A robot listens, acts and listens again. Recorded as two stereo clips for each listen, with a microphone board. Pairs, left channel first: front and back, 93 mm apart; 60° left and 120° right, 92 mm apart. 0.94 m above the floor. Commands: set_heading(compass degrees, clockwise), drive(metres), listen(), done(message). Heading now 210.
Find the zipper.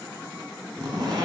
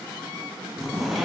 set_heading(55)
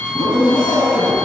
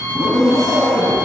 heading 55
set_heading(30)
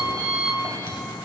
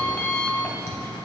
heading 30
listen()
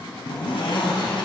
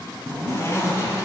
done("Found it: a zipper, straight ahead, 1 to 2 m away.")